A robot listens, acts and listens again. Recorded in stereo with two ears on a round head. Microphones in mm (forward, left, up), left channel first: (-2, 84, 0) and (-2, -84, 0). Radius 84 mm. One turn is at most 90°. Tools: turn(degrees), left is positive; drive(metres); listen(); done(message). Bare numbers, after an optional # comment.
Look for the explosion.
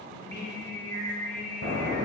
# The explosion: about 60° right or 120° right.
turn(-60)
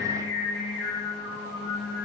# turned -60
listen()
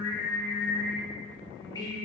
done("I heard an explosion, but can't make it out now. It was about straight ahead or 60° right.")